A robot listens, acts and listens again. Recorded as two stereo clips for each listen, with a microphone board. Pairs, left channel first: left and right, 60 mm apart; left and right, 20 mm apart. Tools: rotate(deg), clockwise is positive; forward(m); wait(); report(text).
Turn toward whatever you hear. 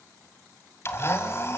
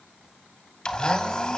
rotate(-45)
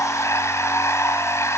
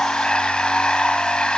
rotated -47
rotate(-75)
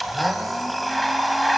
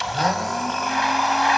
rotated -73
report("Found it: a blender, straight ahead, 1 to 2 m away.")